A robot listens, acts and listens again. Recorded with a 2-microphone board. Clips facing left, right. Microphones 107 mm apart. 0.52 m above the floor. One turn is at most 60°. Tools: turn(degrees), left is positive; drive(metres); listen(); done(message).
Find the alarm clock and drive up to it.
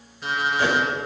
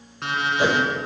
turn(degrees=-60)
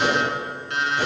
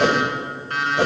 turn(degrees=-45)
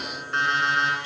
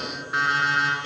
drive(metres=1.0)
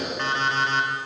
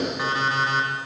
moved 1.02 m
turn(degrees=-10)
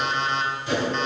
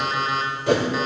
drive(metres=1.0)
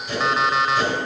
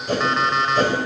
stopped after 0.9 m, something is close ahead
done("I am next to the alarm clock.")